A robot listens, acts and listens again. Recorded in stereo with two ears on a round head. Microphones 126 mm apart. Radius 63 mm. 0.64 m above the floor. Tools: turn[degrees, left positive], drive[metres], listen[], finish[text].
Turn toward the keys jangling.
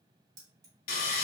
Thought: The keys jangling: about 25° right or 155° right.
Action: turn[-25]
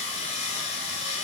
Action: listen[]
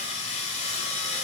Action: listen[]
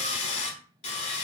Action: finish[I heard keys jangling, but can't make it out now. It was about straight ahead or 130° right.]